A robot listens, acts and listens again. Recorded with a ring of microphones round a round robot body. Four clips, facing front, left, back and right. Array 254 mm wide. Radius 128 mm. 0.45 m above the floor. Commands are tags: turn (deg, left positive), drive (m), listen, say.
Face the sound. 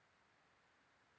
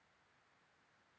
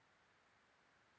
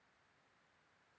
<listen/>
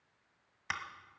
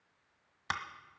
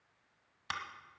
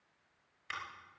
<turn deg="80"/>
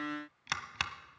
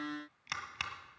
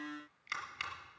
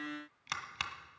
<say>Facing the scissors, 1 to 2 m away.</say>